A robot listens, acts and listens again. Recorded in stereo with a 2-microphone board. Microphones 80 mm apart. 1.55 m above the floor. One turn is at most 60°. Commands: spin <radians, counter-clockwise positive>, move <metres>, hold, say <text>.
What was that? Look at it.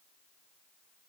hold
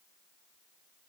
hold
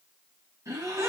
spin -0.70
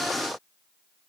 hold
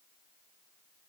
say I heard a gasp, but can't make it out now. It was about straight ahead or 100° right.